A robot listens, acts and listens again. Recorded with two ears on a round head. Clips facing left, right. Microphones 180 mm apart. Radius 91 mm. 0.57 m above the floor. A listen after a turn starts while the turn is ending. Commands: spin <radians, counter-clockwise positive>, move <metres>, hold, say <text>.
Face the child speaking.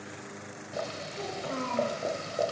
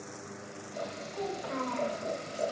spin 0.52
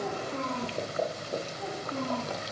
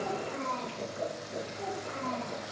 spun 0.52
spin -0.35
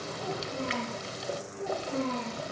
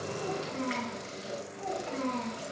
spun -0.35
spin -0.17
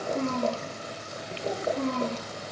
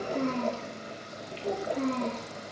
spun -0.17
say Found it: a child speaking, straight ahead.